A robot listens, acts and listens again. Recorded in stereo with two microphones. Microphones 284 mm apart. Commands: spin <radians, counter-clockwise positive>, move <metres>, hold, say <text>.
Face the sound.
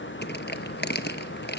spin 0.61
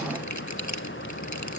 spin 1.92
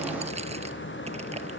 hold
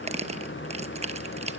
spin -0.35
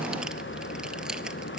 hold
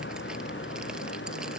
hold
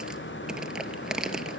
say Found it: crushing, straight ahead.